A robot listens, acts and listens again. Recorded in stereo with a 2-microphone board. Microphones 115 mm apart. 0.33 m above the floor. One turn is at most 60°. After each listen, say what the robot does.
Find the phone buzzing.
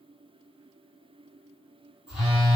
Turn 30° left.
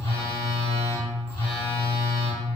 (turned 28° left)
Turn 60° left.
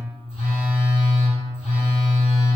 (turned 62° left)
Turn 60° left.
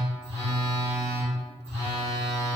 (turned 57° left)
Turn 30° left.
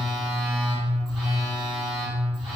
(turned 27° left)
Facing the phone buzzing.